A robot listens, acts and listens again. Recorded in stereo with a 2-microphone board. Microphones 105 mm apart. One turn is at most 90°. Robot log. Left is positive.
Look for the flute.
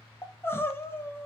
cmd idle
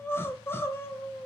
cmd idle
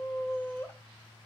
end: I can't make out a flute, only crying.